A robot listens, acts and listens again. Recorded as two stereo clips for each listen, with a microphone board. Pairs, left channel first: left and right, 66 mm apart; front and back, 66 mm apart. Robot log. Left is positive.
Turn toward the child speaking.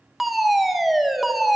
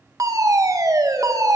cmd idle
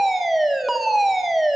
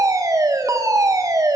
cmd idle
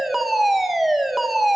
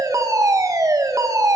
end: I can't make out a child speaking, only a fire alarm.